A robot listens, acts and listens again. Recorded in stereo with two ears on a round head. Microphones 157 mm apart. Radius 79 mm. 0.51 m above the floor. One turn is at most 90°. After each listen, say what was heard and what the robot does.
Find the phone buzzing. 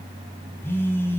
Turn 30° left.
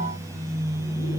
So it is at 20° right. Turn 20° right.
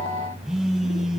Found it: a phone buzzing, straight ahead, 2 to 4 m away.